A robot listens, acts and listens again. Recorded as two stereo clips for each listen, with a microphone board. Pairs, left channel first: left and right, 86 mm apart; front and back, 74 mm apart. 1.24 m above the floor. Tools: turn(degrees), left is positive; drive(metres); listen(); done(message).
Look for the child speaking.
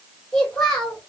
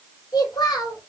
turn(degrees=10)
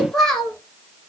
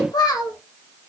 turn(degrees=10)
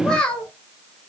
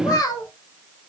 turn(degrees=15)
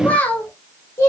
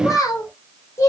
turn(degrees=35)
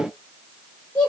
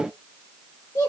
turn(degrees=30)
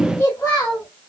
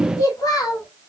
turn(degrees=20)
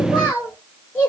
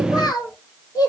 done("Found it: a child speaking, straight ahead.")